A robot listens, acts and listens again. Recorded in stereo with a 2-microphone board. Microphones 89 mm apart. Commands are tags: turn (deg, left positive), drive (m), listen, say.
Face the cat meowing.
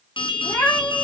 <turn deg="35"/>
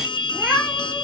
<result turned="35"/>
<say>Found it: a cat meowing, straight ahead, 2 to 4 m away.</say>